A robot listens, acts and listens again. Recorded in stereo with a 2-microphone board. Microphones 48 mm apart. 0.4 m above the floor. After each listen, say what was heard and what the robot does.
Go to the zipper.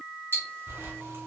The zipper: about 65° right or 115° right. Turn 65° right.
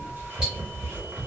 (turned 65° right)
So it is at 45° right. Turn 45° right.
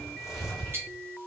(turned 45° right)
Drive 1.0 m forward.
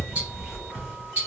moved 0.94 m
Drive 1.0 m forward.
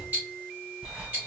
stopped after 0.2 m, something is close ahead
The zipper is now 10° right. Turn 10° right.
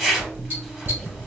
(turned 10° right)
I am next to the zipper.